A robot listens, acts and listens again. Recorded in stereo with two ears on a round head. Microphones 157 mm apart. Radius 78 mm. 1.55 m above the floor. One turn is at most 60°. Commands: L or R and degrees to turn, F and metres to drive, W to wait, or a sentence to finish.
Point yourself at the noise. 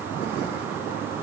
W
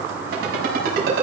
R55
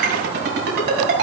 R60
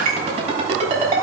R40
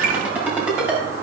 R10
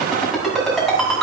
Found it: a ringtone, straight ahead.